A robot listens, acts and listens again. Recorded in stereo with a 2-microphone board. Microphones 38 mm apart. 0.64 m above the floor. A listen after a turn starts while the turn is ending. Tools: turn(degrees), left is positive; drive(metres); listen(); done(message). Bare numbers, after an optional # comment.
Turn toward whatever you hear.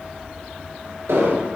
turn(-90)
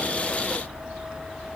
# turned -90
done("Facing where the explosion came from. I can't hear it now.")